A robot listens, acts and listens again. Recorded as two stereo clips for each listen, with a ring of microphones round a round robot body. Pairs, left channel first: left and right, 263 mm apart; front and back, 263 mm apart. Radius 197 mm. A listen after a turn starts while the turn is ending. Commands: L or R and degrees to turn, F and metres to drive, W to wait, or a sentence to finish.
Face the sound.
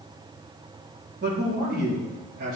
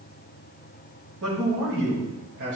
R130
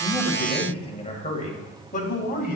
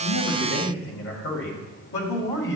L40
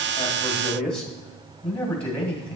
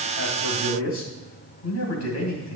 Facing the man speaking.